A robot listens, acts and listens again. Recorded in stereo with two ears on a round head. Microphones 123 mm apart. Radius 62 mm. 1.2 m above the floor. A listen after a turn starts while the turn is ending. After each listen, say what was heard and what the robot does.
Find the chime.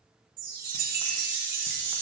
The chime: about 65° right or 115° right. Turn 65° right.
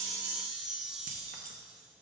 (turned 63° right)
Facing the chime, under 1 m away.